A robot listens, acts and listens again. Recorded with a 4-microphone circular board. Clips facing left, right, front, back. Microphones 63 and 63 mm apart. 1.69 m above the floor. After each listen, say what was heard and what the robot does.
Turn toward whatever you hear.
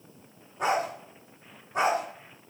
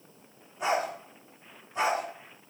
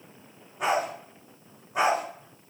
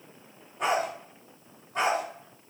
The dog barking: 75° left. Turn 75° left.
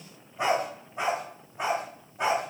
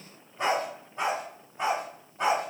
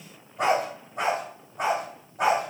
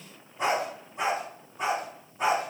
The dog barking is now 10° left. Turn 10° left.
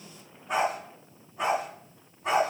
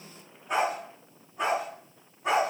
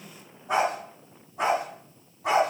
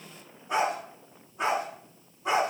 Facing the dog barking.